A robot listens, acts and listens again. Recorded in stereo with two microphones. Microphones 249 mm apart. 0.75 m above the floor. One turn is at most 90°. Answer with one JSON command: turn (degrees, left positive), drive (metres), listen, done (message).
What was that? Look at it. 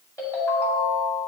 {"turn": 30}
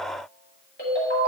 {"turn": 90}
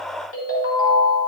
{"turn": 60}
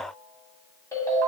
{"turn": 10}
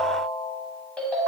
{"done": "Found it: a ringtone, straight ahead."}